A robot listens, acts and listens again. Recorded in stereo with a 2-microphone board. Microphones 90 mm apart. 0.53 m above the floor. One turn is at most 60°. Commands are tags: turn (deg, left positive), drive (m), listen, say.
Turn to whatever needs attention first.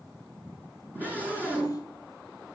<turn deg="-20"/>
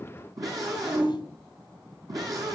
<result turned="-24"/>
<turn deg="-60"/>
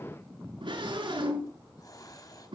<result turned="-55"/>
<turn deg="-60"/>
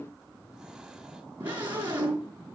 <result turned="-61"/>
<turn deg="-25"/>
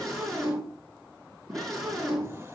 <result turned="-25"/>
<say>Found it: a scream, straight ahead.</say>